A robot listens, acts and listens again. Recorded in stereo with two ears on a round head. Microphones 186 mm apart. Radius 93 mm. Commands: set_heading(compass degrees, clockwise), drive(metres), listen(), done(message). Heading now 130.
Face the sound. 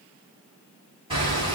set_heading(155)
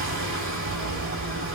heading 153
set_heading(283)
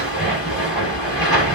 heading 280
done("Facing the hammering.")